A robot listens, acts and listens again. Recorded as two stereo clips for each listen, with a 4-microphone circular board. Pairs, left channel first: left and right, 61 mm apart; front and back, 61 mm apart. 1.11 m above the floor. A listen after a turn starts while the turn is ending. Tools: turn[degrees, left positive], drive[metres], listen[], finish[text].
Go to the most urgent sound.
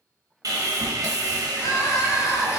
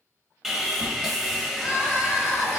Thought: The crying: 70° left.
Action: turn[70]
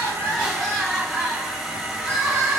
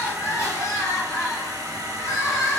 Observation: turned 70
Thought: The crying is now 10° right.
Action: turn[-10]
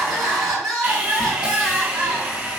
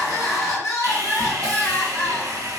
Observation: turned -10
Action: drive[1.0]
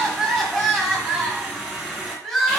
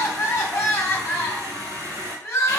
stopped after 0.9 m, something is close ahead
Action: finish[I am next to the crying.]